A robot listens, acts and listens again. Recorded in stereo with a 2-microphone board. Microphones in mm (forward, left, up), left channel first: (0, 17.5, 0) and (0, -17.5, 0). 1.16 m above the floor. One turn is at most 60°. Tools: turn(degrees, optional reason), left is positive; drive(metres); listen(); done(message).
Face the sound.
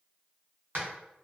turn(degrees=-60, reason="The hammering: about 70° right or 110° right.")
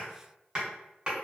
turn(degrees=-25, reason="So it is at 25° right.")
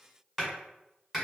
done("Found it: hammering, straight ahead.")